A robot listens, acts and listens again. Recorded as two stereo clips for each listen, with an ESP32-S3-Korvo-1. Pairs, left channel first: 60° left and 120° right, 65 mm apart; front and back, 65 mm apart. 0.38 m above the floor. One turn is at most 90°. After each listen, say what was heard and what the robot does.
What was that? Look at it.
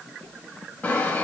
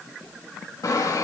Facing the sawing, 2 to 4 m away.